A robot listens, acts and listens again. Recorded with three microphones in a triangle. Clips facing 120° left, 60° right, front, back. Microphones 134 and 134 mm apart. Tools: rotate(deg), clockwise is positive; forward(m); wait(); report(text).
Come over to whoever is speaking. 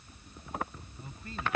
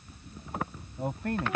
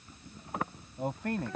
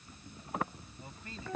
rotate(30)
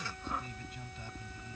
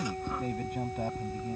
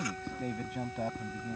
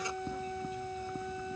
rotate(25)
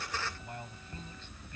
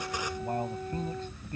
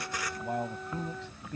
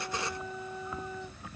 rotate(10)
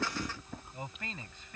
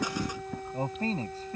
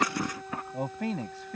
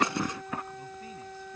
forward(1.0)
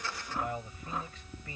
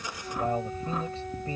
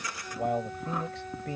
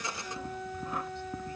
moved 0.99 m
forward(1.0)
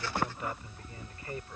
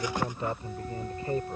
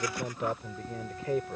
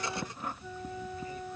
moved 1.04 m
forward(1.0)
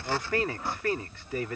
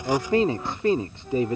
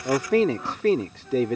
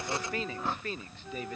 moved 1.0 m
forward(1.0)
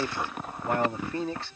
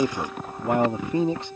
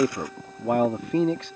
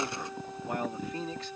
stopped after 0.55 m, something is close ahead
rotate(-10)
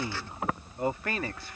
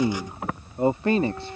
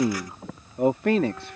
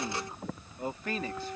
report("Arrived at the man speaking, straight ahead.")